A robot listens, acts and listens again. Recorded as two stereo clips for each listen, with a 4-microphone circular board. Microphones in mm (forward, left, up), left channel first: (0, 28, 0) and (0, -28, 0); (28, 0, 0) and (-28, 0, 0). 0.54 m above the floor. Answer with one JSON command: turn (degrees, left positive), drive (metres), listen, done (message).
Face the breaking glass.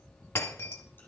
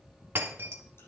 {"turn": 130}
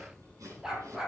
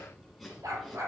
{"done": "Facing where the breaking glass came from. I can't hear it now."}